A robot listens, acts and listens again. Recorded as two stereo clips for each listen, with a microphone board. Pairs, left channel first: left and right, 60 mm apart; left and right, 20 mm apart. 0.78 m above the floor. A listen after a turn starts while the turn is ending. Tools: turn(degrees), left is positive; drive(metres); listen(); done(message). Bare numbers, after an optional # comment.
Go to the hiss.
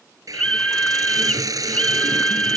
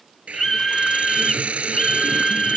# The hiss: about 70° right or 110° right.
turn(-70)
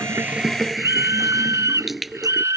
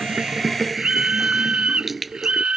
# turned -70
drive(1.0)
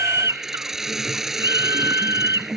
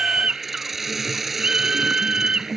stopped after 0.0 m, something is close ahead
done("Blocked. The hiss is further on, straight ahead.")